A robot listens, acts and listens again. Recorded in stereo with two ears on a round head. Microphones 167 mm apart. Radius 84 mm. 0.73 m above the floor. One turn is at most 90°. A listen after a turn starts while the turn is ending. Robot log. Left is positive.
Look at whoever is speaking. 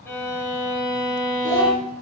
cmd yaw -30
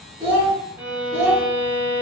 note: So it is at 140° right.
cmd yaw -90
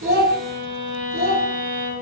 note: The child speaking is now 35° right.
cmd yaw -35
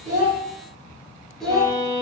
end: Found it: a child speaking, straight ahead, 1 to 2 m away.